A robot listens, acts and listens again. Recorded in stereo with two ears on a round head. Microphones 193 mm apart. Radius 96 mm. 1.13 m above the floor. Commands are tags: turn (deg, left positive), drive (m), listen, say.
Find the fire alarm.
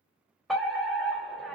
<turn deg="30"/>
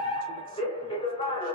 <turn deg="150"/>
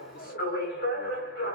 <turn deg="60"/>
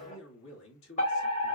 <turn deg="40"/>
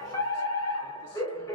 <turn deg="20"/>
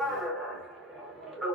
<say>Found it: a fire alarm, straight ahead, 1 to 2 m away.</say>